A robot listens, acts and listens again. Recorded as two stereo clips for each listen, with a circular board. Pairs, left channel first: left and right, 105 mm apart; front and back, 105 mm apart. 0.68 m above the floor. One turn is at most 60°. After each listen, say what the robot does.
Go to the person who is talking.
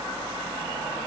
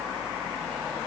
Keep listening.
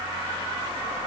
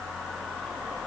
Keep listening.
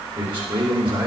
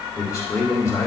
Turn 55° right.
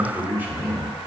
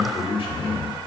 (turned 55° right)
Turn 20° right.
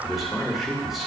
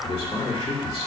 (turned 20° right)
Drive 1.0 m forward.
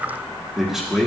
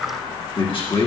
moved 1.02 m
Drive 1.0 m forward.
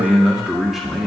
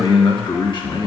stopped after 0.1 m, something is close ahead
I am next to the man speaking.